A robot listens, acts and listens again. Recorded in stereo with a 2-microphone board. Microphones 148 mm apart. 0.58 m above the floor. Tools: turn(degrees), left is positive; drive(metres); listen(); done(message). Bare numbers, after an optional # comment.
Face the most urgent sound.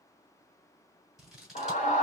# The scream: about 50° left or 130° left.
turn(50)
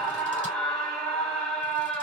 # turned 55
done("Found it: a scream, straight ahead, 1 to 2 m away.")